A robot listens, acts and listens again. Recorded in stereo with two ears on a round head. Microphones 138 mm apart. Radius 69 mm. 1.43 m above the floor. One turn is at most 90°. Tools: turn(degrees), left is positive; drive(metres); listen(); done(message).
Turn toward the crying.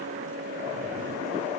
listen()
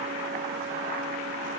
listen()
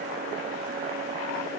done("I can't make out crying to turn to.")